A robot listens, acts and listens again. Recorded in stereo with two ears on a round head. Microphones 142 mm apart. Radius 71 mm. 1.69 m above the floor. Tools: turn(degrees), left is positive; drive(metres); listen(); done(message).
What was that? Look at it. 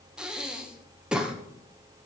turn(degrees=-30)
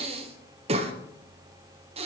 turn(degrees=-140)
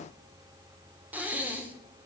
turn(degrees=-10)
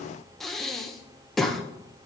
done("Found it: breathing, straight ahead.")